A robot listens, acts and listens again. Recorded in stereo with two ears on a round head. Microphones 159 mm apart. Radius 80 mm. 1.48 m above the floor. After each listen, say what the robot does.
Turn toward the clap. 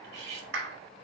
Turn 90° right.
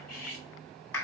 Turn 15° left.
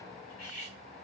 Keep listening.
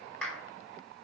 Found it: a clap, straight ahead.